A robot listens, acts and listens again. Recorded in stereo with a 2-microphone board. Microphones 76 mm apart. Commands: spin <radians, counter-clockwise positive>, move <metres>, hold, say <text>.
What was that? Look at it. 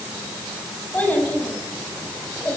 spin 0.35
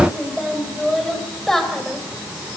spin 0.52
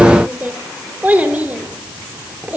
spin -0.35
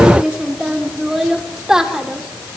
spin -0.17
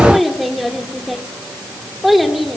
say Facing the child speaking, 2 to 4 m away.